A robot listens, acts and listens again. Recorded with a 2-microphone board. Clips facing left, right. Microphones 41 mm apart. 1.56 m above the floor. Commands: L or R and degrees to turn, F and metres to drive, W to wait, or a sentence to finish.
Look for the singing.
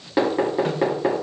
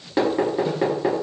W
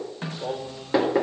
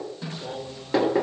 L60
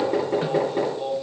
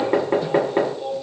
L20
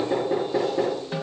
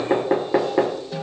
W
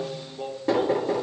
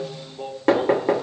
Facing the singing.